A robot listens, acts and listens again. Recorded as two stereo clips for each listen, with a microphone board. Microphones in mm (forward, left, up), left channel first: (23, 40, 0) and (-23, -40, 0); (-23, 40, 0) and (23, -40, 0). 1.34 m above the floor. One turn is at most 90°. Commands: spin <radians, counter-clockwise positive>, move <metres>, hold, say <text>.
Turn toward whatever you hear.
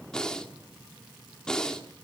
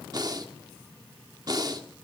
spin -0.35
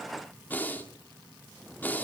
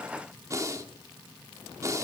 spin -0.17
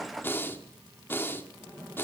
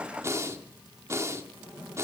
say Found it: breathing, straight ahead, 1 to 2 m away.